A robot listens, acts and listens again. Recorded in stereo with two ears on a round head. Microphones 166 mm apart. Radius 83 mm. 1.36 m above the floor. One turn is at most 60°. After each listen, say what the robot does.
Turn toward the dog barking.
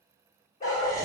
Turn 30° left.
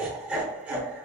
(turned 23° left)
Keep listening.
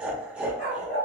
Turn 40° left.
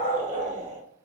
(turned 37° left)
Turn 60° left.
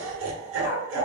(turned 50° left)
Turn 55° left.
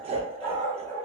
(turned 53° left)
Facing the dog barking.